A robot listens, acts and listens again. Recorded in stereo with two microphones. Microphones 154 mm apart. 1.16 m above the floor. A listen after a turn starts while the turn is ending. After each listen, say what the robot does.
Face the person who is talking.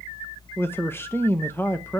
Turn 15° left.
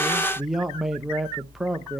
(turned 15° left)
Facing the man speaking, under 1 m away.